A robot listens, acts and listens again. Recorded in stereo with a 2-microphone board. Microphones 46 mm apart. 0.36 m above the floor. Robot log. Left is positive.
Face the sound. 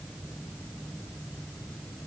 cmd idle
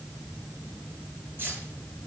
note: The keys jangling: about 45° right or 135° right.
cmd yaw -45
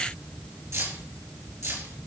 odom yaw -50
note: So it is at 80° right.
cmd yaw -80
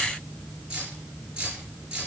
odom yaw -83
note: The keys jangling is now 20° right.
cmd yaw -20
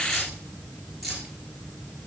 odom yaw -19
end: Found it: keys jangling, straight ahead.